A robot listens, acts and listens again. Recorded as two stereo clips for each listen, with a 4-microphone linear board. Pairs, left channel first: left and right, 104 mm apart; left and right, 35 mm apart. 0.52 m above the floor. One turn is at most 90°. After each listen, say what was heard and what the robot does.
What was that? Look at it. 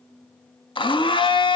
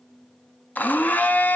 The blender: about 55° left or 125° left. Turn 55° left.
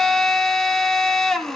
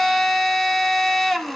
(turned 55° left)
Found it: a blender, straight ahead, under 1 m away.